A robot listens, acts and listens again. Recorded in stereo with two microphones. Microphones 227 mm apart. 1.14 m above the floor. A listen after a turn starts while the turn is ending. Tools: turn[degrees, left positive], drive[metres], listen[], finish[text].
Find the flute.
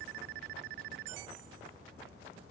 Action: listen[]
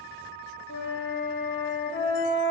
Thought: The flute: about 60° left or 120° left.
Action: turn[60]
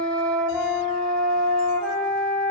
Action: finish[Found it: a flute, straight ahead, 1 to 2 m away.]